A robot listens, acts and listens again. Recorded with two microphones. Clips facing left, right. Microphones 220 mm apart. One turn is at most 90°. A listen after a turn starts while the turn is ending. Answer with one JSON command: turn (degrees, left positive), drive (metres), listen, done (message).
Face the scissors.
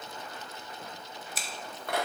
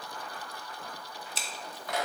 {"turn": -30}
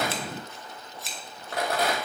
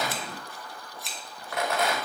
{"done": "Found it: scissors, straight ahead, 1 to 2 m away."}